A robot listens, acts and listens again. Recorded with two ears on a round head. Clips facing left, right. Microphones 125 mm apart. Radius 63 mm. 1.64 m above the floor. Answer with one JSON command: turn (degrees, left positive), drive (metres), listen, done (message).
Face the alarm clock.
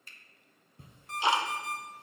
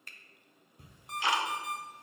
{"turn": -15}
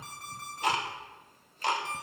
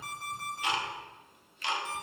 {"done": "Found it: an alarm clock, straight ahead."}